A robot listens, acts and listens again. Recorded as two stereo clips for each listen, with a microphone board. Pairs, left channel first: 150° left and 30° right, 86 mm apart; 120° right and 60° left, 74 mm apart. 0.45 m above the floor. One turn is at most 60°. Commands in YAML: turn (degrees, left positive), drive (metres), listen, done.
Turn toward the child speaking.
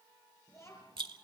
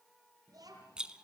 turn: 60
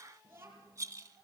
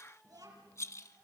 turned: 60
turn: 35
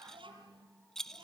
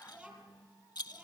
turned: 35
turn: -15
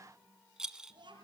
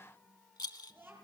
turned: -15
done: "Facing the child speaking, over 4 m away."